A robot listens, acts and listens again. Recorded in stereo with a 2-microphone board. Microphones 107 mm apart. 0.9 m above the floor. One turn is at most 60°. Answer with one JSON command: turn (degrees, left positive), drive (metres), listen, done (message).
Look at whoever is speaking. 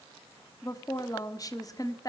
{"turn": 35}
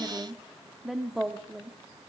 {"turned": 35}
{"done": "Facing the woman speaking."}